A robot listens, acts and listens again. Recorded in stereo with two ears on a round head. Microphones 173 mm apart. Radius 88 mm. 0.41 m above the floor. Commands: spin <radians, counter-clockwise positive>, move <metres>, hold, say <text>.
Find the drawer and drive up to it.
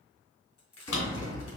spin 1.57
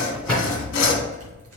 move 1.0
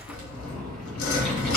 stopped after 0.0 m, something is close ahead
say Something is in my way. I am facing the drawer but have not reached it.